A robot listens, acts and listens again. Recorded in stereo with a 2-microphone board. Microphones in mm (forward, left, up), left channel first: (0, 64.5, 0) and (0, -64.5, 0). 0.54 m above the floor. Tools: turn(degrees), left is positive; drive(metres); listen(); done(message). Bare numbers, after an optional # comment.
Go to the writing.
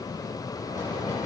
listen()
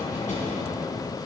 listen()
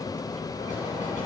done("I can't make out writing, only knocking.")